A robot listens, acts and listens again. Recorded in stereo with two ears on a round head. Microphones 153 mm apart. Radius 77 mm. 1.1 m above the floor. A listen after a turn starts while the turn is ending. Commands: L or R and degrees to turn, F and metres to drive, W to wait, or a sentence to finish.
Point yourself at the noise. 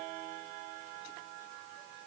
W
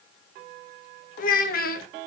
L65
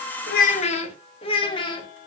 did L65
L30
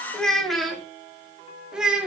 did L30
Found it: a child speaking, straight ahead.